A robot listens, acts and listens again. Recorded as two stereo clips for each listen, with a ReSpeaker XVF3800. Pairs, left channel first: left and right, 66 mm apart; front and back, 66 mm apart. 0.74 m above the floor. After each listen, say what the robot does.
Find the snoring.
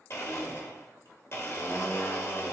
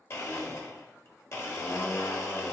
Keep listening.
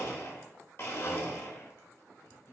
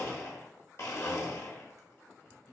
Keep listening.
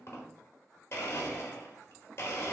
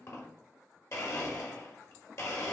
I can't make out snoring to turn to.